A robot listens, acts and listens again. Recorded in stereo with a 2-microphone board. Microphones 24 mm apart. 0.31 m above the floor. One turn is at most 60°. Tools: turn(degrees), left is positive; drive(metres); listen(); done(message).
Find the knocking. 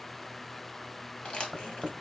turn(degrees=-30)
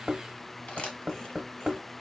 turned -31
turn(degrees=-60)
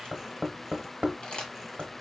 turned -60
turn(degrees=-55)
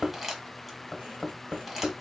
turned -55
done("Found it: knocking, straight ahead, 1 to 2 m away.")